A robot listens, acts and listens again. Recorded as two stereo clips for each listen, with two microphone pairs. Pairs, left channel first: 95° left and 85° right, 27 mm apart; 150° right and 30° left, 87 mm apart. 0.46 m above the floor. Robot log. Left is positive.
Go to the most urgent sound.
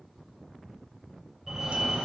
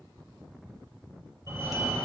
note: The fire alarm: 10° right.
cmd yaw -10
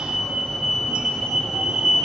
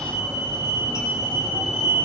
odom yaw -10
cmd fwd 1.0
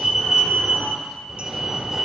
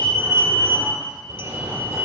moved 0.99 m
cmd fwd 1.0
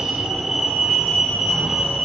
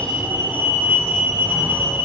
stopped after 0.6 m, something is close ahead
note: The fire alarm is now 15° right.
cmd yaw -15
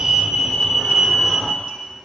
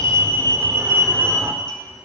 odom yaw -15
end: Arrived at the fire alarm, straight ahead.